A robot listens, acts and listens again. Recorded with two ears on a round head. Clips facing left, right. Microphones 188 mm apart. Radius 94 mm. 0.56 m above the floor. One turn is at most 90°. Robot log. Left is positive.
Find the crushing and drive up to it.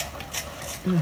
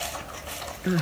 cmd idle
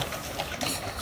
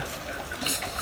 cmd idle
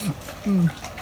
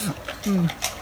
end: I can't make out crushing to turn to.